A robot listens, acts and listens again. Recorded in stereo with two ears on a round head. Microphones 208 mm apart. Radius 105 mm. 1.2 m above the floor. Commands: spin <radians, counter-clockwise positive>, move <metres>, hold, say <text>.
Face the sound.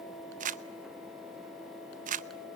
spin -0.61
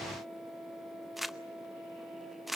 say Found it: crumpling, straight ahead, under 1 m away.